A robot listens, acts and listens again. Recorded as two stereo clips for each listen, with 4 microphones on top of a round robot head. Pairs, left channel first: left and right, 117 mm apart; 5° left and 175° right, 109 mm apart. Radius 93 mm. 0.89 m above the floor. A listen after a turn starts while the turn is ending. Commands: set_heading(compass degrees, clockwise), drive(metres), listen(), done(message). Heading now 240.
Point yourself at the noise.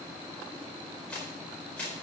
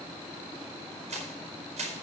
set_heading(70)
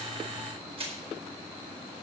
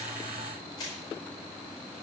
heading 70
set_heading(125)
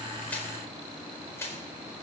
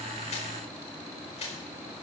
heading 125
set_heading(100)
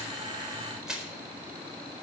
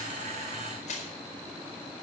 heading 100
done("Facing the crushing, over 4 m away.")